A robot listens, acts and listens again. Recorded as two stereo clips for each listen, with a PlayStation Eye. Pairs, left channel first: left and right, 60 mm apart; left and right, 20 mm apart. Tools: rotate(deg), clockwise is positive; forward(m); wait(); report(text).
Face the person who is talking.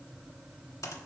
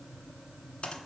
wait()
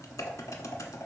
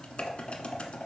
wait()
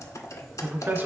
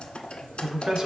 rotate(35)
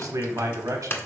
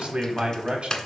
rotate(105)
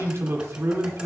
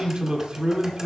rotate(50)
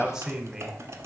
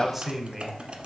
rotate(10)
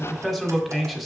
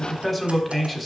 report("Found it: a man speaking, straight ahead.")